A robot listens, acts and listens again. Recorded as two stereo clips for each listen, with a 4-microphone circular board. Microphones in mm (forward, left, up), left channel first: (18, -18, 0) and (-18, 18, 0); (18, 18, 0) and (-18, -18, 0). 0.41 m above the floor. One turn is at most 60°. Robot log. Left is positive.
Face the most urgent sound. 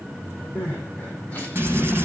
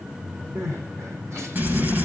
note: The crying: 105° right.
cmd yaw -60
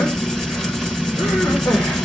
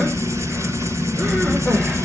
note: Nothing new. It was at 45° right.
cmd yaw -45
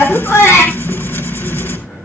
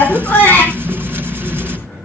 note: The crying is now 10° right.
cmd yaw -10
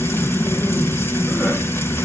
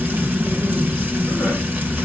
cmd idle
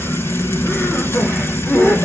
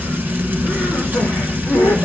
end: Facing the crying.